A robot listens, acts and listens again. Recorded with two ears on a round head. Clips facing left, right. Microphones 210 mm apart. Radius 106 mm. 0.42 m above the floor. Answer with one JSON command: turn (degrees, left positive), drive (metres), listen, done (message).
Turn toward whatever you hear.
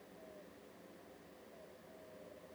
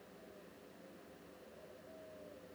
{"listen": true}
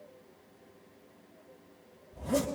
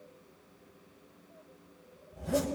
{"turn": -30}
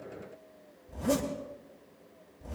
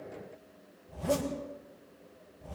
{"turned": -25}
{"turn": 20}
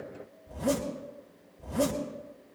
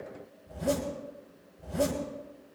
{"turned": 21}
{"done": "Facing the zipper."}